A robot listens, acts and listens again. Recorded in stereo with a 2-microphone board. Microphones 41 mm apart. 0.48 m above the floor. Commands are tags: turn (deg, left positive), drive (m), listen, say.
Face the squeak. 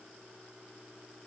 <listen/>
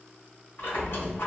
<turn deg="60"/>
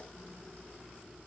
<listen/>
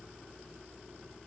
<listen/>
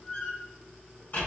<turn deg="50"/>
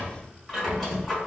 <turn deg="10"/>
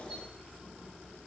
<listen/>
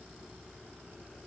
<listen/>
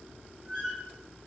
<say>Facing the squeak, 1 to 2 m away.</say>